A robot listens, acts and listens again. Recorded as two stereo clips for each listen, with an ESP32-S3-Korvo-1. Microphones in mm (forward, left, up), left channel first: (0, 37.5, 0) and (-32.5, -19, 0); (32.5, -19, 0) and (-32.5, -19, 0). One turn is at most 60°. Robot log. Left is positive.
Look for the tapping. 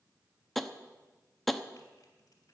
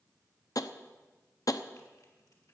note: The tapping: 25° right.
cmd yaw -25
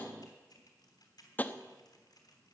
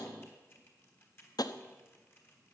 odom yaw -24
end: Facing the tapping.